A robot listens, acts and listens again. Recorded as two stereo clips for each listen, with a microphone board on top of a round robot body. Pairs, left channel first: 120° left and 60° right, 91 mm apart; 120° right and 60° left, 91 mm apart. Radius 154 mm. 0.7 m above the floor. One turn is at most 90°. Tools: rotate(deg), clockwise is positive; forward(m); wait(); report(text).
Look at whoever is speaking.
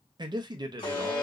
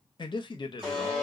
rotate(90)
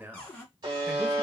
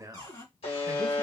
rotate(-10)
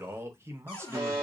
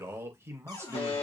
report("Found it: a man speaking, straight ahead.")